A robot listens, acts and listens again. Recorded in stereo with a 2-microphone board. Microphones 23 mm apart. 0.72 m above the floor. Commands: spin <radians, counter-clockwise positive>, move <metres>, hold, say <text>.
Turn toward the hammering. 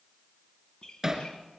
spin -0.35
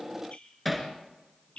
say Facing the hammering.